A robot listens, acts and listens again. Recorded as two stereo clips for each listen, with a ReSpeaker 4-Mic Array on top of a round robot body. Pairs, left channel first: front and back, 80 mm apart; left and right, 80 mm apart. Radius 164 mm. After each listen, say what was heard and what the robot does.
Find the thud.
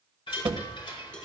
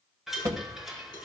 The thud: 140° right. Turn 140° right.
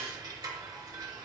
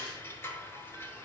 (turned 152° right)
Nothing new. It was at 10° left. Turn 10° left.
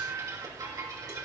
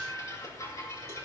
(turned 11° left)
I heard a thud from this way, but can't make it out now.